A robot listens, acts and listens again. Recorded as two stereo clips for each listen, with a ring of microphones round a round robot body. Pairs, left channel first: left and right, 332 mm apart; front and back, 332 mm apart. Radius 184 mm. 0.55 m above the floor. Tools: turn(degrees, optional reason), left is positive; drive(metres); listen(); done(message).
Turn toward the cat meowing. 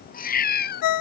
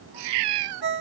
turn(degrees=150, reason="The cat meowing: 150° left.")
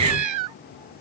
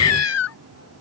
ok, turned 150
turn(degrees=-50, reason="The cat meowing is now 50° right.")
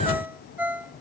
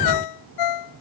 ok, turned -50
listen()
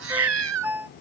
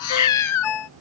turn(degrees=-40, reason="The cat meowing is now 40° right.")
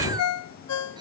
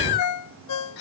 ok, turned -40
turn(degrees=-10, reason="The cat meowing is now 10° right.")
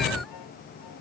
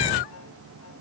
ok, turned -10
listen()
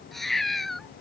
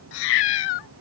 done("Facing the cat meowing.")